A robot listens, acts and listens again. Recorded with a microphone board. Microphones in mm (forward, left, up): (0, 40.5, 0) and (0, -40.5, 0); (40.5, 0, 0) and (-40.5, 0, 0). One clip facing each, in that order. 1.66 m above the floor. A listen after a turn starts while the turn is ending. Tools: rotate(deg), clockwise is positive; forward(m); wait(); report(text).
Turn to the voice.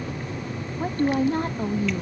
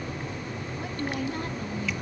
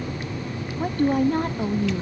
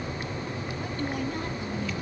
rotate(-40)
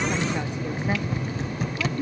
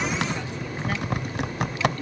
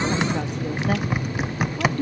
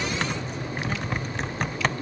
rotate(-20)
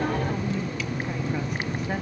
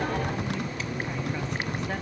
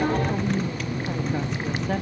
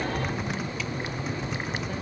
wait()
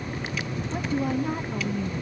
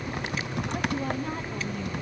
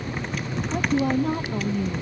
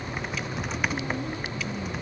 report("Found it: a woman speaking, straight ahead.")